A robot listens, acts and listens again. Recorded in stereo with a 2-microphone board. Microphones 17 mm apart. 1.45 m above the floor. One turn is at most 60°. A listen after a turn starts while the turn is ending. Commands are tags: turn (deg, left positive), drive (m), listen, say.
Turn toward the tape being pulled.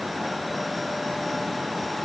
<listen/>
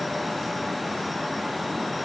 <listen/>
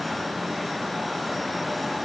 <say>I can't make out tape being pulled to turn to.</say>